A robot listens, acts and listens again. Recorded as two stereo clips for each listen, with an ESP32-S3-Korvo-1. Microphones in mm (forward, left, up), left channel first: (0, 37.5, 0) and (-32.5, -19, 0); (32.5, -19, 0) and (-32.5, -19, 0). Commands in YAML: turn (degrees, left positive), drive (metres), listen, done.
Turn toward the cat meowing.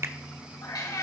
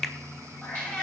turn: 65
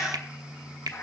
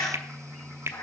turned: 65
turn: 10
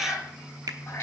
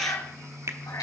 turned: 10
done: "Facing the cat meowing, over 4 m away."